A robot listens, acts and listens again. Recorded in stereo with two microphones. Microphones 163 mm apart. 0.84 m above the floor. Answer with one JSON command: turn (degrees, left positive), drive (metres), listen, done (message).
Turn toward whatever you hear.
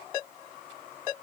{"listen": true}
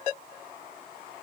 {"listen": true}
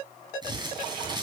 {"turn": -25}
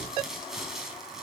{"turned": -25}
{"done": "Facing the crumpling, 2 to 4 m away."}